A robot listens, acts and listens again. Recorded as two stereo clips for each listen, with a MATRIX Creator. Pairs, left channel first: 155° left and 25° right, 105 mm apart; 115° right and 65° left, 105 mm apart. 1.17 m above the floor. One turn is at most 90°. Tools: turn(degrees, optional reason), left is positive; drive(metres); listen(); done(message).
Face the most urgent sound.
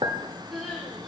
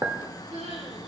turn(degrees=70, reason="The crying: 70° left.")
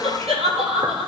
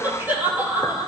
done("Facing the crying, over 4 m away.")